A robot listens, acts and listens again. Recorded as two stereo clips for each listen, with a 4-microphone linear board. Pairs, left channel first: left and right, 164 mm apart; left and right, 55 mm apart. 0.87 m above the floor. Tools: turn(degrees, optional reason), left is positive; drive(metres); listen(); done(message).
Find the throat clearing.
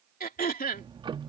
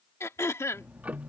turn(degrees=65, reason="The throat clearing: about 65° left or 115° left.")
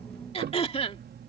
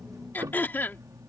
turn(degrees=40, reason="So it is at 40° left.")
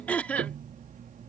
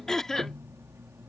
turn(degrees=10, reason="The throat clearing is now 10° left.")
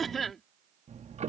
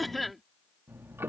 done("Found it: throat clearing, straight ahead.")